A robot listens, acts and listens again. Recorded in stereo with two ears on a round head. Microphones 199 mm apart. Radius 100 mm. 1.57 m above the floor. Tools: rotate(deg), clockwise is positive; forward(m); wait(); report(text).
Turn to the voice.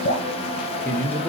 rotate(-30)
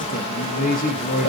rotate(-140)
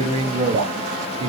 rotate(25)
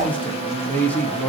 report("Found it: a man speaking, straight ahead.")